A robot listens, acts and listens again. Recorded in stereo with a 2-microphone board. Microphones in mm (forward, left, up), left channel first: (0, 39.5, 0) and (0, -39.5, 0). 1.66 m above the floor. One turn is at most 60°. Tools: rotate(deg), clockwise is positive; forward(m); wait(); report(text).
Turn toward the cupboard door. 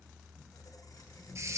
wait()
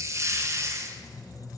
wait()
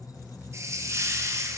report("I can't make out a cupboard door to turn to.")